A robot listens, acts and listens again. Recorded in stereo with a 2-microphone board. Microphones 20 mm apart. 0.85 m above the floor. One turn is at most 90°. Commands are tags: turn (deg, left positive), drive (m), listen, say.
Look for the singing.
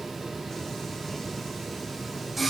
<turn deg="30"/>
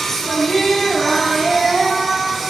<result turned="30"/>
<turn deg="30"/>
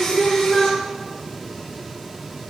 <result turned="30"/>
<turn deg="90"/>
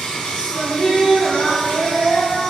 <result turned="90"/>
<turn deg="85"/>
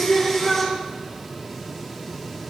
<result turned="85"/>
<say>Facing the singing, over 4 m away.</say>